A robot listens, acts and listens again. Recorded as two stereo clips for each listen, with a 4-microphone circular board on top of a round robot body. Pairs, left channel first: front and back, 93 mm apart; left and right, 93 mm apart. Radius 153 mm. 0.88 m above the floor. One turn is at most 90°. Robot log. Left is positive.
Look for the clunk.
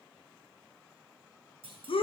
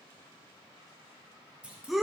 note: The clunk: 165° right.
cmd yaw -90
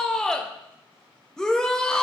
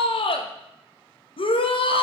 note: Nothing new. It was at 75° right.
cmd yaw -75
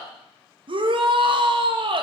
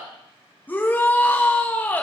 end: I heard a clunk from this way, but can't make it out now.